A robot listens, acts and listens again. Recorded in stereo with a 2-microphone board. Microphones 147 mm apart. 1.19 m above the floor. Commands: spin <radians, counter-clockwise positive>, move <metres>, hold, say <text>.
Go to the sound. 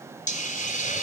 spin 1.13
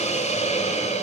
spin 0.87
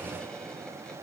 hold
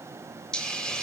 move 1.0
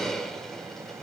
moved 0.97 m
move 1.0
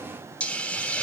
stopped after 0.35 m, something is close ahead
spin 0.17
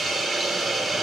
say Something is in my way. I am facing the hiss but have not reached it.